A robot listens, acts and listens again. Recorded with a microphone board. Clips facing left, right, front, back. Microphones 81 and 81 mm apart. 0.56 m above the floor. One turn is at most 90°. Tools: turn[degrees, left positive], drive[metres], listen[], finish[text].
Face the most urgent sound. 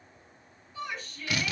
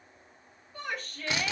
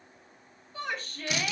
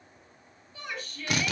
Thought: The shout: 55° right.
Action: turn[-55]
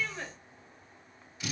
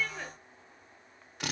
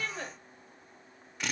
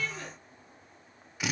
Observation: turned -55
Action: finish[Facing the shout.]